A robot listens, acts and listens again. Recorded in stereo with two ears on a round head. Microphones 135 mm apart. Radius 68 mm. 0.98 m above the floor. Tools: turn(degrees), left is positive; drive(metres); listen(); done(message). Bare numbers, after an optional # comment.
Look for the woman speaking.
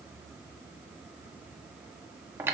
listen()
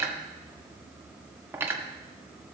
listen()
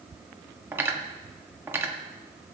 done("I can't make out a woman speaking, only cutlery clinking.")